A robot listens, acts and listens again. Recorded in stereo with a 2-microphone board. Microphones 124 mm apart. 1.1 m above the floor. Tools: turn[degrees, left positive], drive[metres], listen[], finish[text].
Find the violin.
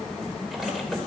Action: listen[]
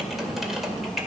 Action: listen[]
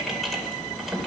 Action: finish[I can't make out a violin to turn to.]